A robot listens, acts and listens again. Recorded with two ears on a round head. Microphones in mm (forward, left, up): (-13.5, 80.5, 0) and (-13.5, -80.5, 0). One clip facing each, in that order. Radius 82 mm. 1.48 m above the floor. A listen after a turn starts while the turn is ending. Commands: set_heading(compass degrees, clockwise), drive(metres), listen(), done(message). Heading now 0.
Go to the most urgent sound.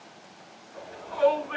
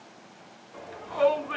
set_heading(90)
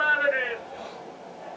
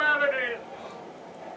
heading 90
drive(1.0)
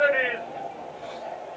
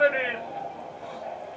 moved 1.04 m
drive(1.0)
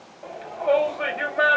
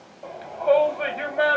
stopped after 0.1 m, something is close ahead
done("Arrived at the shout, straight ahead.")